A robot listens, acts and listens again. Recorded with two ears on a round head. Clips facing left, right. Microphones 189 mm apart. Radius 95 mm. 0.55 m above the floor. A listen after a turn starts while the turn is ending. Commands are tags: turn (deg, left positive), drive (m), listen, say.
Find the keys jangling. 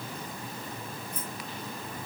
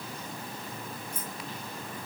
<turn deg="-40"/>
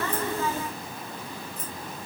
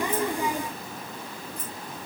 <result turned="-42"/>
<listen/>
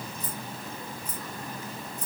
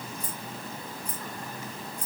<say>Found it: keys jangling, straight ahead.</say>